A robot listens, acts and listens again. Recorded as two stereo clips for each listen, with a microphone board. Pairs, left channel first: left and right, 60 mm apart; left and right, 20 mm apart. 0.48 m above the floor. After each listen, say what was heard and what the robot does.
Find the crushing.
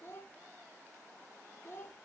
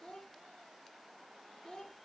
Keep listening.
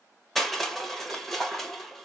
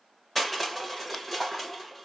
Turn 30° left.
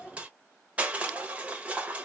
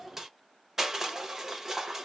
So it is at 25° right. Turn 25° right.
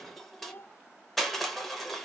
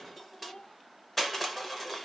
Found it: crushing, straight ahead.